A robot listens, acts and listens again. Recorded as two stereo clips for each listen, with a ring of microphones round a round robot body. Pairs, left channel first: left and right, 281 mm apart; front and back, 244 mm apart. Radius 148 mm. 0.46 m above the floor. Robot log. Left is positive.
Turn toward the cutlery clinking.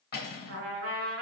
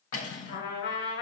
note: The cutlery clinking: 35° left.
cmd yaw +35
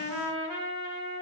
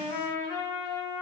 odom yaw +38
cmd idle
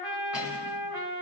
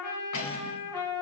cmd idle
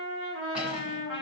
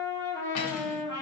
end: Facing where the cutlery clinking came from. I can't hear it now.